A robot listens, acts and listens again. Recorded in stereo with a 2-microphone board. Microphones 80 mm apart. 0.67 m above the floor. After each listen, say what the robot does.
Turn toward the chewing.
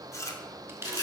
Turn 35° left.
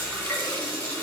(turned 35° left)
Keep listening.
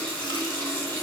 Keep listening.
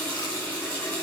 I heard chewing, but can't make it out now. It was about straight ahead or 110° left.